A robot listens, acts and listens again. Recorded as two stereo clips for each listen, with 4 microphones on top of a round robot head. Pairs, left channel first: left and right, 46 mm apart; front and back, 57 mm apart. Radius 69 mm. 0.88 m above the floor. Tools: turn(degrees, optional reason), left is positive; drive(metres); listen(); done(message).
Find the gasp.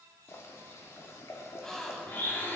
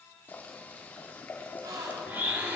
turn(degrees=170, reason="The gasp: 170° left.")
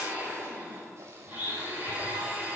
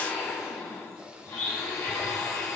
done("Facing where the gasp came from. I can't hear it now.")